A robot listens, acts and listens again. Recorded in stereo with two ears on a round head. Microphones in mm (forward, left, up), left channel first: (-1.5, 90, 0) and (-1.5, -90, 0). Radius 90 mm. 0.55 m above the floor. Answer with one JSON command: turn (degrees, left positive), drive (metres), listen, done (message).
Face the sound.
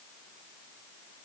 {"listen": true}
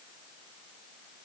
{"listen": true}
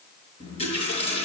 {"turn": 30}
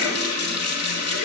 {"turn": 120}
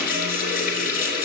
{"turn": 50}
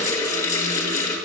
{"turn": 15}
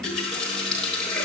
{"done": "Found it: a running tap, straight ahead."}